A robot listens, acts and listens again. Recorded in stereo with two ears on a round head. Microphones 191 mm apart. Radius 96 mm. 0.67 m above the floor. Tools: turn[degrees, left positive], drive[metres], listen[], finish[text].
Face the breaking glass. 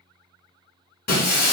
Thought: The breaking glass: about 50° left or 130° left.
Action: turn[50]
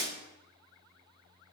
Action: listen[]
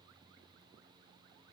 Action: finish[I heard breaking glass, but can't make it out now. It was about straight ahead or 80° left.]